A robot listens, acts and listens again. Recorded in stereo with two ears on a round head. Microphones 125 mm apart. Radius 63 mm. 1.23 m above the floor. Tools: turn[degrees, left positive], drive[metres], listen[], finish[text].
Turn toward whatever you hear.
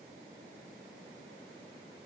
Action: listen[]
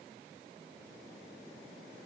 Action: listen[]
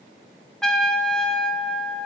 Action: turn[30]
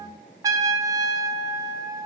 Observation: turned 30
Thought: So it is at 30° right.
Action: turn[-30]
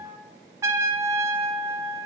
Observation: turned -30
Thought: The trumpet is now 25° right.
Action: turn[-25]
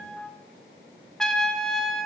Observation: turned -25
Action: finish[Found it: a trumpet, straight ahead.]